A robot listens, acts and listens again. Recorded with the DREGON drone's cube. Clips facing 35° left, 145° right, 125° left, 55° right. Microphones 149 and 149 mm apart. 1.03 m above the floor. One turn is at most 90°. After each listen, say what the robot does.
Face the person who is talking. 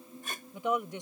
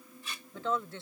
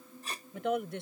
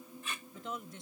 Turn 90° left.
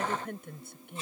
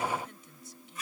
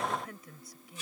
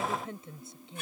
Turn 10° left.
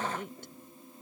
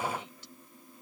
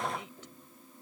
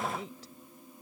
Facing the woman speaking.